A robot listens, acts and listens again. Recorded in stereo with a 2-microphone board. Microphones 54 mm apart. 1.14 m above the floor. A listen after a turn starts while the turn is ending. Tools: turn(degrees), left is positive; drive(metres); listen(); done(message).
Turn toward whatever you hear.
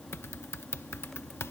turn(degrees=60)
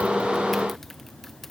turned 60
listen()
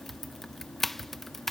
done("Facing the typing on a keyboard.")